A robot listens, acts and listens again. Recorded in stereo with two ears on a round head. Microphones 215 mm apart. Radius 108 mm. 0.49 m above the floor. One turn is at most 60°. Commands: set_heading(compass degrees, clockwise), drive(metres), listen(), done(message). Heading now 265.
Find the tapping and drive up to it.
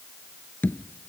set_heading(235)
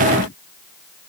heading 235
listen()
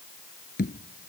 set_heading(175)
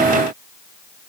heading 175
set_heading(115)
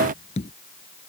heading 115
set_heading(85)
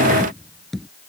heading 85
drive(1.0)
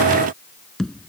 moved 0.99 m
drive(1.0)
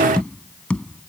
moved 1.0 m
drive(1.0)
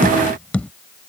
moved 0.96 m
drive(1.0)
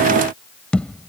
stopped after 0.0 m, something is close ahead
done("I am next to the tapping.")